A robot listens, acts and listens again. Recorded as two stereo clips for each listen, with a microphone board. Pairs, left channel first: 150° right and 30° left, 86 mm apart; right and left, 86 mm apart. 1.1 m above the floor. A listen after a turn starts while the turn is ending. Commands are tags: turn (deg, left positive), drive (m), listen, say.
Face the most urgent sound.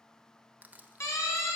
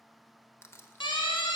<turn deg="-95"/>
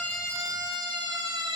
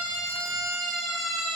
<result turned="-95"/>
<say>Facing the siren, 2 to 4 m away.</say>